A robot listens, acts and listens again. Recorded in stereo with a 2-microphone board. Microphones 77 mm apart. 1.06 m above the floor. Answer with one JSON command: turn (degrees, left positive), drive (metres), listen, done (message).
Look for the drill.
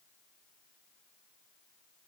{"listen": true}
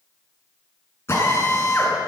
{"turn": 35}
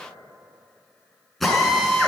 {"done": "Facing the drill."}